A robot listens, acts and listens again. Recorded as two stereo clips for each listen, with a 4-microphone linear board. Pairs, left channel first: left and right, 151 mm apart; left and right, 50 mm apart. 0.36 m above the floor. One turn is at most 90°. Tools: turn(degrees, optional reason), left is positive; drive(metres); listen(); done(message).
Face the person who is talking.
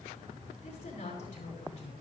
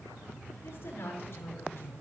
turn(degrees=50, reason="The woman speaking: about 50° left or 130° left.")
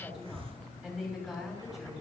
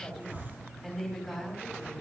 done("Facing the woman speaking, over 4 m away.")